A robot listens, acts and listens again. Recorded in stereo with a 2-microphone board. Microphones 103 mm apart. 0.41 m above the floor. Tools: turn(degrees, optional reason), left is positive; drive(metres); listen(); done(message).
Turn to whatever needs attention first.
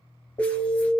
turn(degrees=55, reason="The alarm: about 55° left or 125° left.")
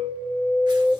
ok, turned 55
turn(degrees=20, reason="So it is at 20° left.")
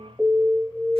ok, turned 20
done("Found it: an alarm, straight ahead, 1 to 2 m away.")